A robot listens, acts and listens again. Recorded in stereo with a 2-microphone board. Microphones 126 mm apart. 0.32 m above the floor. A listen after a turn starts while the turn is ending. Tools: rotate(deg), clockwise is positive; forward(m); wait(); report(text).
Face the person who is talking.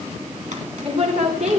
rotate(55)
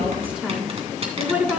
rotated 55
rotate(10)
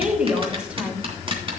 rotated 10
rotate(10)
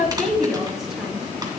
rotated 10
report("Found it: a woman speaking, straight ahead.")